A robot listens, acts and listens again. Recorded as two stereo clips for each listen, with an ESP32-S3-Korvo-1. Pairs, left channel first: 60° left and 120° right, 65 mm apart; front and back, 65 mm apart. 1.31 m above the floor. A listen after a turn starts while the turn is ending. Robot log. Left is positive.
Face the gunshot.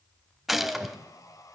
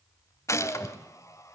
note: The gunshot: 30° right.
cmd yaw -30
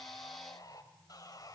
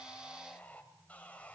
end: Facing where the gunshot came from. I can't hear it now.